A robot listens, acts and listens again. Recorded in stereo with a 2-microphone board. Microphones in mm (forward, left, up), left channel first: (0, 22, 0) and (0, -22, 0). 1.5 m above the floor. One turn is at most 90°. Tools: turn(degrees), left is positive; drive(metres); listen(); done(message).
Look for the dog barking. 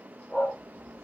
turn(degrees=15)
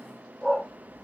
turn(degrees=-30)
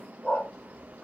done("Found it: a dog barking, straight ahead, 2 to 4 m away.")